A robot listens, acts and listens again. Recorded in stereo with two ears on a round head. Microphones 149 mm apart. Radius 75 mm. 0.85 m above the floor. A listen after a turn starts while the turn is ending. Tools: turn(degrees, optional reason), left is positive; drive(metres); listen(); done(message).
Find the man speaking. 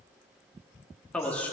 turn(degrees=30)
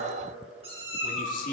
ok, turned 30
turn(degrees=125, reason="So it is at 125° left.")
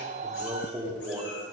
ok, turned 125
turn(degrees=-15, reason="The man speaking is now 15° right.")
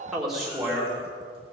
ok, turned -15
done("Found it: a man speaking, straight ahead.")